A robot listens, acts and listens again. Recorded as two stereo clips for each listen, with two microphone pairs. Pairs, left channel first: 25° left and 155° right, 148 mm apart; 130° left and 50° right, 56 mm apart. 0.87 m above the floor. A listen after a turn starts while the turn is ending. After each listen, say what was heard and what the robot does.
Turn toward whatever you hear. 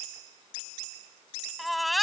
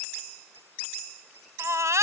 The baby crying: 65° right. Turn 65° right.
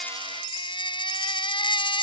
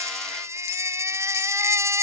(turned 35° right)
The baby crying is now 30° right. Turn 30° right.
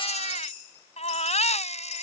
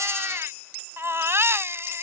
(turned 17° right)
The baby crying is now 15° right. Turn 15° right.
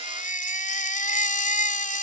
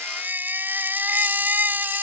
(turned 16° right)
Facing the baby crying.